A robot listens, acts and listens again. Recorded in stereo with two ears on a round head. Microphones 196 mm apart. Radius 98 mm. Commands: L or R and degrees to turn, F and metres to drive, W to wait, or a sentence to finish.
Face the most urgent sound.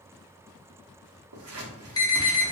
L20
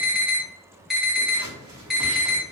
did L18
Found it: an alarm, straight ahead, 1 to 2 m away.